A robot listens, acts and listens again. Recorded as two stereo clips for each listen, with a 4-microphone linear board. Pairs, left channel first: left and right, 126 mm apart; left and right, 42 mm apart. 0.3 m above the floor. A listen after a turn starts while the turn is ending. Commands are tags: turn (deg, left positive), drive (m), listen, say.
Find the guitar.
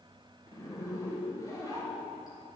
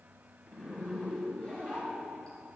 <listen/>
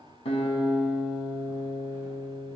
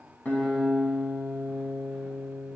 <turn deg="60"/>
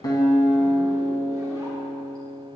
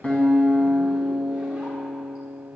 <turn deg="10"/>
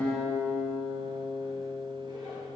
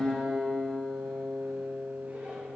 <say>Found it: a guitar, straight ahead.</say>